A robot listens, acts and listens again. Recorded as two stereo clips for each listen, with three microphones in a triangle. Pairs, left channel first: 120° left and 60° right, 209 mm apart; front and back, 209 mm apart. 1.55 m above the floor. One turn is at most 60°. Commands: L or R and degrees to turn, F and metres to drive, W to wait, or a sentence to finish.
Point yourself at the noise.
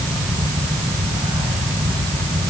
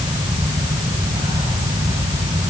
W
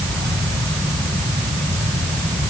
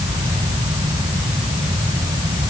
W
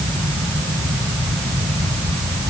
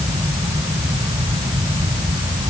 I can't make out anything.